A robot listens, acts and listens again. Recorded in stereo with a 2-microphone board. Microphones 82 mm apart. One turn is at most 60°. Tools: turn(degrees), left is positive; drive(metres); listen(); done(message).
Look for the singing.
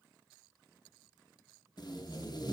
listen()
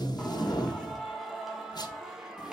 turn(degrees=-30)
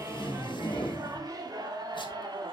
turn(degrees=-60)
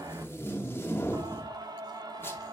turn(degrees=-55)
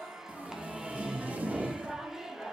done("Facing the singing, 1 to 2 m away.")